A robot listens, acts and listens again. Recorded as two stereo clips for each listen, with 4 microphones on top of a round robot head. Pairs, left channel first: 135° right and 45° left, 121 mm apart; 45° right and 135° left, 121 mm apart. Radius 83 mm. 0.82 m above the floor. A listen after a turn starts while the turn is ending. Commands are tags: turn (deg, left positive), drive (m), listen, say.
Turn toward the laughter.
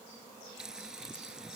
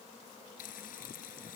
<listen/>
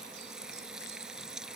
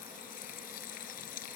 <listen/>
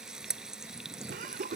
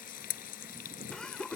<turn deg="40"/>
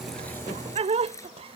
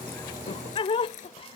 <say>Found it: laughter, straight ahead.</say>